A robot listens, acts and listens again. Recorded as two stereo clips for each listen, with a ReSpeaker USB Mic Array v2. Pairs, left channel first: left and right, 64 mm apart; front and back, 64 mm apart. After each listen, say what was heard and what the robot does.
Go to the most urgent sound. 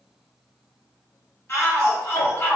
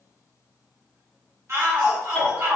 The shout: 135° left. Turn 135° left.
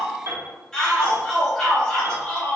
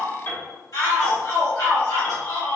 The shout is now 10° left. Turn 10° left.
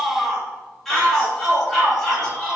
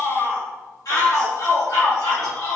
Drive 1.0 m forward.
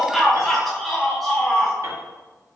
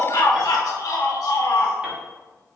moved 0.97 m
Drive 1.0 m forward.
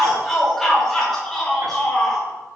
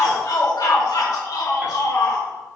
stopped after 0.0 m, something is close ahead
Arrived at the shout, straight ahead.